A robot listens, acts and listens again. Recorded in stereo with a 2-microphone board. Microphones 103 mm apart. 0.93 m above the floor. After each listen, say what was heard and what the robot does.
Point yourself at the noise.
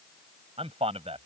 The man speaking: about 75° right or 105° right. Turn 75° right.
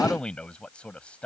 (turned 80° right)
So it is at 10° left. Turn 10° left.
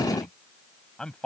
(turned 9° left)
The man speaking is now 10° left. Turn 10° left.
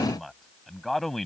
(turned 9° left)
Facing the man speaking.